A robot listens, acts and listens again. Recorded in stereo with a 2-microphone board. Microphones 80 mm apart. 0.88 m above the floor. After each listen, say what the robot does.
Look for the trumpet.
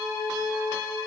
Keep listening.
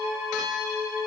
Keep listening.
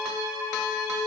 I can't make out a trumpet.